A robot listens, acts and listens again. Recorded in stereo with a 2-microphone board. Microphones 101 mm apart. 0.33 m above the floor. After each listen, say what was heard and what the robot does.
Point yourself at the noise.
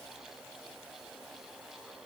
Keep listening.
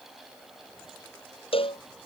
The cowbell: about 65° left or 115° left. Turn 65° left.
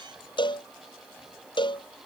So it is at 50° left. Turn 50° left.
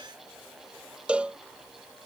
The cowbell is now 10° right. Turn 10° right.
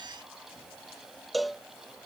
Found it: a cowbell, straight ahead.